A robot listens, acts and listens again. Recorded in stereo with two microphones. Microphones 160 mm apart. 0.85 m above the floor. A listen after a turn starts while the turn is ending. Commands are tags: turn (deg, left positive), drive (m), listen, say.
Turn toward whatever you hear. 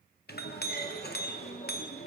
<turn deg="90"/>
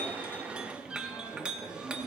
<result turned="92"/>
<say>Facing the clink.</say>